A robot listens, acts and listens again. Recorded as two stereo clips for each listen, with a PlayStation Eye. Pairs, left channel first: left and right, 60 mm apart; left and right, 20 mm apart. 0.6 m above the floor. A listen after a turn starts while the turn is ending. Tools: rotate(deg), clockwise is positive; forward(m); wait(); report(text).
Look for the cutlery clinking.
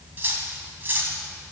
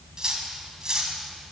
rotate(35)
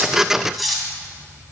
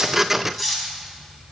report("Facing the cutlery clinking.")